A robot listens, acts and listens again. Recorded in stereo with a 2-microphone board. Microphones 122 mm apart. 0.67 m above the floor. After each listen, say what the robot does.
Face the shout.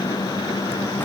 Keep listening.
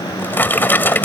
Keep listening.
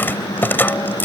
I can't make out a shout, only a drawer.